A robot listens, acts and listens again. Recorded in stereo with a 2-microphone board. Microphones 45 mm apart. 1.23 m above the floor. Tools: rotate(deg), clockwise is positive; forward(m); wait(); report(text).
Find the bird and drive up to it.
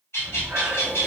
rotate(-70)
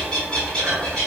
rotate(-20)
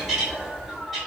forward(1.0)
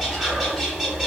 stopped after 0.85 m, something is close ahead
wait()
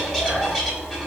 wait()
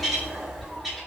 report("I am next to the bird.")